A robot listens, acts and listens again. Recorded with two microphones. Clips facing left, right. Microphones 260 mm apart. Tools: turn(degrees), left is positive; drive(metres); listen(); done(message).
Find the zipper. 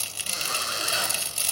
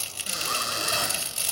turn(degrees=-55)
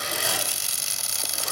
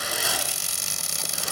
done("Found it: a zipper, straight ahead.")